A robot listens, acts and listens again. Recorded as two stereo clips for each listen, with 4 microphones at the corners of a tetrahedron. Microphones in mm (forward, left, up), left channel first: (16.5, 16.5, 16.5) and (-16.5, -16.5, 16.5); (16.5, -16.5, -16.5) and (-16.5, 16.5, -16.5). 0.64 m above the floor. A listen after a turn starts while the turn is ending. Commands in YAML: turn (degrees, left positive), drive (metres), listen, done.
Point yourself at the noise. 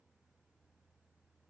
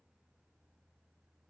listen: true
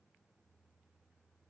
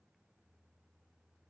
listen: true
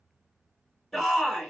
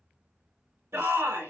turn: 130
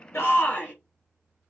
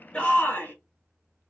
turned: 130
turn: -10
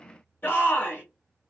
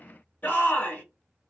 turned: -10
done: "Found it: a shout, straight ahead."